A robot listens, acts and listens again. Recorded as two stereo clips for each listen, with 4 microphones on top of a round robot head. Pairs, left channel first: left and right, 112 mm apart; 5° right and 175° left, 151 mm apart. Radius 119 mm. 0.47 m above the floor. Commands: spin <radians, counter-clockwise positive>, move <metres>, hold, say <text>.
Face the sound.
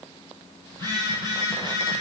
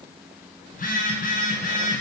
spin 0.44
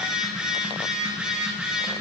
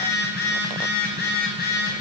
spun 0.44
spin -0.17
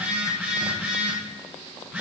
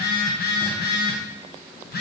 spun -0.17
say Facing the phone buzzing, over 4 m away.